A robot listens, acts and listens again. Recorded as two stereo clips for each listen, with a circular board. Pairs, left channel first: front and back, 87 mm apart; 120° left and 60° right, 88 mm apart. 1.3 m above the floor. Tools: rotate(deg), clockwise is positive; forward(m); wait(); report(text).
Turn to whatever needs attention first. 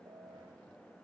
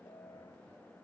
wait()
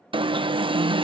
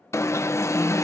rotate(-175)
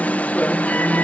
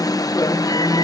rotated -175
rotate(-75)
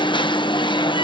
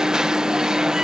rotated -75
rotate(-20)
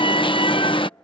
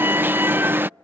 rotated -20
report("Facing the alarm.")